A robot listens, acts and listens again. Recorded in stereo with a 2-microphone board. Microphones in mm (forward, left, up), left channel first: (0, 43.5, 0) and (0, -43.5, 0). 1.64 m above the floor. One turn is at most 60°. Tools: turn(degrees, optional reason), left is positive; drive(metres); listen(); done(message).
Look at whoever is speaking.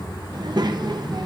turn(degrees=-55, reason="The child speaking: about 55° right or 125° right.")
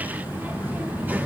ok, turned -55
listen()
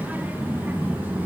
turn(degrees=-25, reason="So it is at 25° right.")
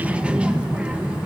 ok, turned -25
turn(degrees=-15, reason="The child speaking is now 15° right.")
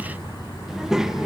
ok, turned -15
turn(degrees=-10, reason="The child speaking is now 10° right.")
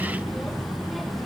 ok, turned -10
done("Facing the child speaking, under 1 m away.")